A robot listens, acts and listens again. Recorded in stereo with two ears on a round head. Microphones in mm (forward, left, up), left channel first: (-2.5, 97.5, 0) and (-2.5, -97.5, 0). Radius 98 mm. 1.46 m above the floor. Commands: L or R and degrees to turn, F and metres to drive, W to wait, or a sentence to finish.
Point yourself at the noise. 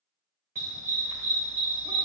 R25
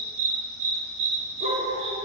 R25
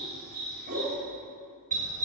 R35
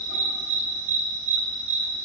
R115
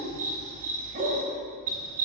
R35
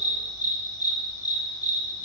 L20
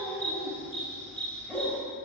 Facing the dog barking.